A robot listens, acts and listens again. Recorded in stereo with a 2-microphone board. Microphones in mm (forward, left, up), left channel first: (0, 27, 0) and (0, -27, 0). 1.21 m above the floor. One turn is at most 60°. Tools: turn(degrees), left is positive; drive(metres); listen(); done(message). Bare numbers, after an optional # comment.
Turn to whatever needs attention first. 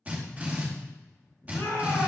turn(60)
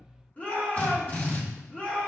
# So it is at 25° left.
turn(25)
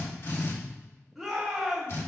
done("Facing the shout.")